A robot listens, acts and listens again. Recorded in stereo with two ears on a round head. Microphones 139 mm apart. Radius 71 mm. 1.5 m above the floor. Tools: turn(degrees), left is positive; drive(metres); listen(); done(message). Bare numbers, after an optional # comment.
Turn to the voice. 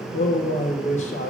# The man speaking: about 50° left or 130° left.
turn(50)
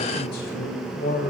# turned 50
# So it is at 80° left.
turn(80)
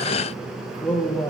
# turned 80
# The man speaking is now 10° left.
turn(10)
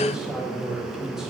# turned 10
done("Found it: a man speaking, straight ahead, 1 to 2 m away.")